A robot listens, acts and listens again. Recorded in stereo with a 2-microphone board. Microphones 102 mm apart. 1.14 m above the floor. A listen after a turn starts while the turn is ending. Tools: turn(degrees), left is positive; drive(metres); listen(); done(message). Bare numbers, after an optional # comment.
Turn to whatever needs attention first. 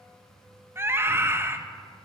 # The scream: about 25° right or 155° right.
turn(-25)
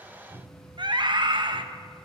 # So it is at 130° right.
turn(-130)
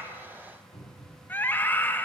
# The scream is now 20° left.
turn(20)
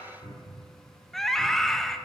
done("Facing the scream, 1 to 2 m away.")